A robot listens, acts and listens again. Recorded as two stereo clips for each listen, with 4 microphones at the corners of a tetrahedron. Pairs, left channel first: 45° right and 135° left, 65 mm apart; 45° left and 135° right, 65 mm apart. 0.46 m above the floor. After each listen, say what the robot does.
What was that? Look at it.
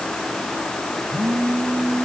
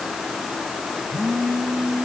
Turn 135° right.
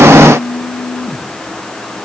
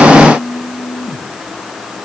Turn 30° right.
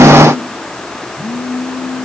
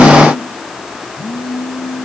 Turn 10° right.
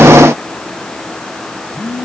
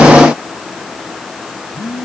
Facing the phone buzzing.